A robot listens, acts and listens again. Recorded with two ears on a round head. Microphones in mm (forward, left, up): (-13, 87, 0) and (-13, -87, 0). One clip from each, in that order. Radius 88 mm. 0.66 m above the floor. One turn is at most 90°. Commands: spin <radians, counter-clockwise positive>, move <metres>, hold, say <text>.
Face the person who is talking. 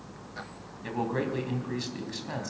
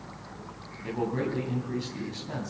spin 0.79
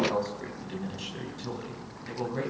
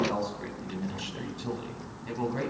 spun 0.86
say Found it: a man speaking, straight ahead.